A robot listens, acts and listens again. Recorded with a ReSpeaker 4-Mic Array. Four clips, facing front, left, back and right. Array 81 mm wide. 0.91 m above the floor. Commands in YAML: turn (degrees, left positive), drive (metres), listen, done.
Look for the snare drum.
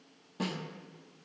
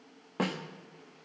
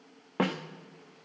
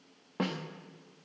turn: 170
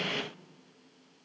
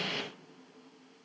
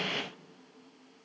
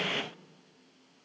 listen: true
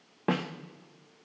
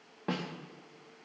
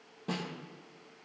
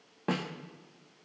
turn: -10
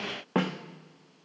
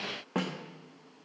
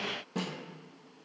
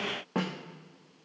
done: "Found it: a snare drum, straight ahead, under 1 m away."